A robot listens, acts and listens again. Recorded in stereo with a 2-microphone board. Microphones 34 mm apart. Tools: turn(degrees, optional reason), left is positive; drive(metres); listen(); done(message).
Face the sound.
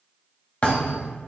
turn(degrees=40, reason="The thud: about 40° left or 140° left.")
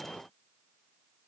listen()
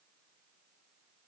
done("I heard a thud, but can't make it out now. It was about straight ahead or 100° left.")